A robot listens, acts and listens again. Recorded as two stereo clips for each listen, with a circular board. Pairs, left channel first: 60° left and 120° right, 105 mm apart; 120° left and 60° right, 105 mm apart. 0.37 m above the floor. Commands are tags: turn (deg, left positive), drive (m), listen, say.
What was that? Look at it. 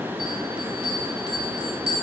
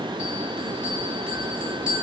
<turn deg="25"/>
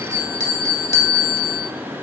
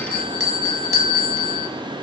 <say>Facing the bell, 1 to 2 m away.</say>